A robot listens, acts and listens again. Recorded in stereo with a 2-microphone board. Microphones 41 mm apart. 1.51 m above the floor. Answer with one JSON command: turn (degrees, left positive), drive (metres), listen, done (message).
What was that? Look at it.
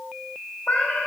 {"turn": 45}
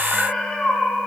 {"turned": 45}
{"turn": 15}
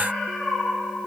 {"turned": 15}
{"turn": 10}
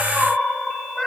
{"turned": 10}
{"done": "Found it: a cat meowing, straight ahead."}